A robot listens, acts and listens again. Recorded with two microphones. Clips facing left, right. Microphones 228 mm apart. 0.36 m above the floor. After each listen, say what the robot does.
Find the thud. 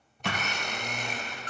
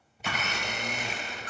Turn 75° left.
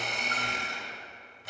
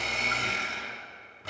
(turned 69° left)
Keep listening.
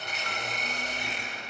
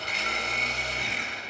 I heard a thud, but can't make it out now. It was about 5° left or 35° left.